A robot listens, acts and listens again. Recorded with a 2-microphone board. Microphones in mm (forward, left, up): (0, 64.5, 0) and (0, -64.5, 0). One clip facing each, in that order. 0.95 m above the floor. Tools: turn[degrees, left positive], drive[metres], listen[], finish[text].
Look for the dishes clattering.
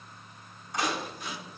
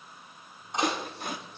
Thought: The dishes clattering: about 25° right or 155° right.
Action: turn[-25]
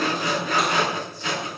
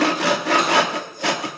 Action: listen[]
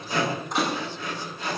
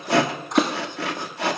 Action: listen[]
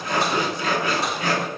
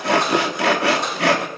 Action: finish[I heard dishes clattering, but can't make it out now. It was about straight ahead or 130° right.]